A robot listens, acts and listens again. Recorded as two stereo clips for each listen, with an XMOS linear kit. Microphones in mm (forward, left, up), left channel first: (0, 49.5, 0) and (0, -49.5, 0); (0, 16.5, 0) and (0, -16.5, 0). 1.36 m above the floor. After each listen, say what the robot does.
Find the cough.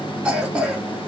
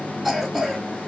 Turn 30° right.
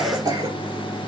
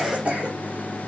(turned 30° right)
Turn 140° right.
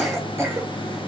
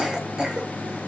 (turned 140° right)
Turn 25° right.
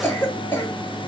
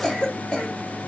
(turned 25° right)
Turn 20° left.
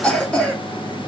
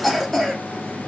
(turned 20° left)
Turn 10° left.
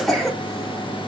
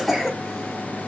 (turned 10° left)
Found it: a cough, straight ahead.